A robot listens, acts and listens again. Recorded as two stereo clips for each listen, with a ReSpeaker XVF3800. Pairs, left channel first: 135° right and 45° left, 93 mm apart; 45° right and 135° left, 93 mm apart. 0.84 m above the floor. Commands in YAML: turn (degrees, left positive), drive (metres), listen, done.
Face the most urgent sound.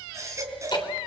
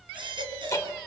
turn: 105
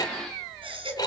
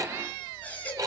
turn: 30
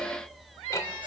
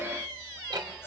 listen: true
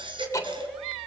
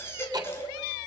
turn: 20
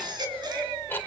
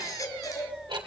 done: "Facing the baby crying."